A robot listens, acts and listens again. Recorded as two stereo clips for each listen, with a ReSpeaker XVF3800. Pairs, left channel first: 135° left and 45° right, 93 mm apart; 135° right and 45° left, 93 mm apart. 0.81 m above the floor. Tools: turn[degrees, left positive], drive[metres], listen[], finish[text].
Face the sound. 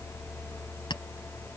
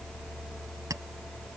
Thought: The clink: 100° left.
Action: turn[100]
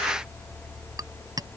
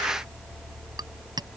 Action: finish[Facing the clink.]